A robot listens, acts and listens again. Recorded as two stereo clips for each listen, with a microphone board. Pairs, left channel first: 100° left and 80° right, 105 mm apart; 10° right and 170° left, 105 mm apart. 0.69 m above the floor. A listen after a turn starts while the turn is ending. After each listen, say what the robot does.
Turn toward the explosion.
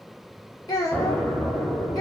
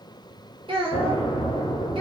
Turn 20° left.
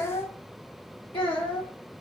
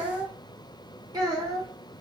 Facing where the explosion came from. I can't hear it now.